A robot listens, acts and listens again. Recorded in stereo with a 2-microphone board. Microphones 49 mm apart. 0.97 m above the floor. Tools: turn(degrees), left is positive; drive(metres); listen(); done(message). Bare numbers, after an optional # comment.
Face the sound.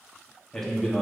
turn(30)
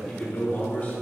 # So it is at 150° left.
turn(150)
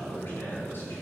# The man speaking is now 45° left.
turn(45)
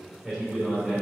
done("Found it: a man speaking, straight ahead.")